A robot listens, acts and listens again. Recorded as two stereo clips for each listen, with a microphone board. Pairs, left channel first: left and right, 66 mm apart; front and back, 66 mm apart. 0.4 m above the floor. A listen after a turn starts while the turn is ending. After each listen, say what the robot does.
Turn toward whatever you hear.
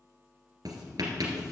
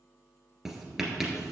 Turn 95° right.
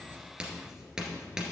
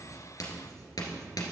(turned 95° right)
Turn 10° right.
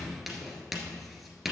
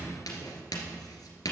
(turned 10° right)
Found it: writing, straight ahead.